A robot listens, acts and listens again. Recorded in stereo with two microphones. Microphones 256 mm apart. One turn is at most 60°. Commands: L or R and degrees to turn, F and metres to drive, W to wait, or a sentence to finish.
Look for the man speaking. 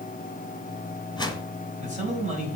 R25
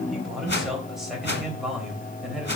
Facing the man speaking.